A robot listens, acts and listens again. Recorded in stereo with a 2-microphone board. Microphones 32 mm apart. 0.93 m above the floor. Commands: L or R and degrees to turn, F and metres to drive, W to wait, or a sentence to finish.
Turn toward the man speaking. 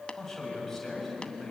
L30
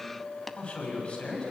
L145
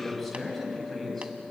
Facing the man speaking, over 4 m away.